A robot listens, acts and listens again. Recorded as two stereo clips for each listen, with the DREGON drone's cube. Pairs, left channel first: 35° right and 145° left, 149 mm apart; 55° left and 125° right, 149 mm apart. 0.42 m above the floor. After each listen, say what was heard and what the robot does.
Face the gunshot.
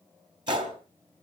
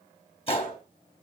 The gunshot: 95° left. Turn 95° left.
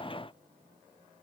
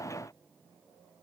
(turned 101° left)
I heard a gunshot from this way, but can't make it out now.